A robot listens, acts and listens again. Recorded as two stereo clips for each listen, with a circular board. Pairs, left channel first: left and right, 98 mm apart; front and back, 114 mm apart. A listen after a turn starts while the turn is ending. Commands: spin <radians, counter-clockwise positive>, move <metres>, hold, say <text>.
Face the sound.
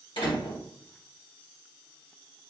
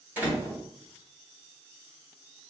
spin 1.92
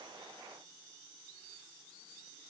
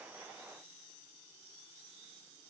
say Facing where the door slam came from. I can't hear it now.